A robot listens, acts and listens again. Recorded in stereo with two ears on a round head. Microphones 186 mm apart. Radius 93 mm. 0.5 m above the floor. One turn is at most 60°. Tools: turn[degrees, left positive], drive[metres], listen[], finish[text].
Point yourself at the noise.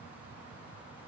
Action: listen[]
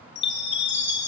Thought: The chime: about 60° left or 120° left.
Action: turn[60]
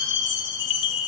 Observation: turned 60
Thought: So it is at 65° left.
Action: turn[60]
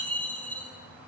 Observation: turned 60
Action: finish[Found it: a chime, straight ahead, over 4 m away.]